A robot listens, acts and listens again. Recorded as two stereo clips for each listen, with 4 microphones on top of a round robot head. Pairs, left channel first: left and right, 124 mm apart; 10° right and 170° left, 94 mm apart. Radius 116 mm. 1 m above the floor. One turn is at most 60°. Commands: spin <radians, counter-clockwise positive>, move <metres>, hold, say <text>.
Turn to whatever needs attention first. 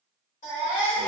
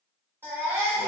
spin 1.05
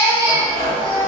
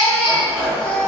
spin 0.44
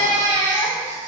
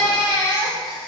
say Facing the baby crying, 1 to 2 m away.